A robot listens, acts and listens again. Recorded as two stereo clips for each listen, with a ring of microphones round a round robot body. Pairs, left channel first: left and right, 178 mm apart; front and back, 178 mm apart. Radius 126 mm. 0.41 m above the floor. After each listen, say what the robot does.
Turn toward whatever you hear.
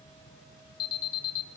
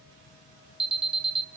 Turn 125° left.
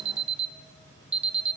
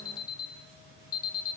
Turn 40° right.
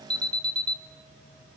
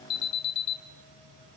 Facing the alarm, 1 to 2 m away.